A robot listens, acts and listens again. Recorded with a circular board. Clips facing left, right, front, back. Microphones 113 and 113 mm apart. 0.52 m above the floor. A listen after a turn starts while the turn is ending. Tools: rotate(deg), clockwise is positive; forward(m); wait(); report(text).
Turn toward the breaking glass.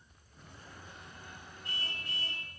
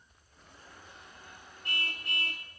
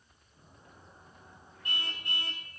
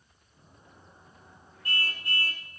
wait()
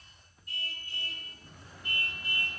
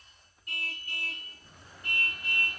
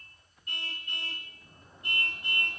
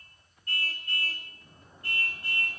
wait()
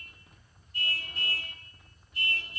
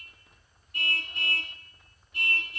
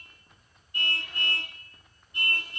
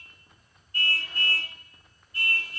report("I can't make out breaking glass, only a car horn.")